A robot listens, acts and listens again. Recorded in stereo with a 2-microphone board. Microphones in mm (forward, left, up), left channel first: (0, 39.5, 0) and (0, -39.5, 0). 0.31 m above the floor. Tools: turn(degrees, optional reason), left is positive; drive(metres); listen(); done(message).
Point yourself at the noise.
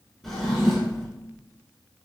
turn(degrees=30)
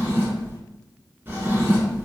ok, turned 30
turn(degrees=-30, reason="So it is at 30° right.")
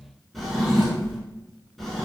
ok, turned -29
done("Found it: a drawer, straight ahead.")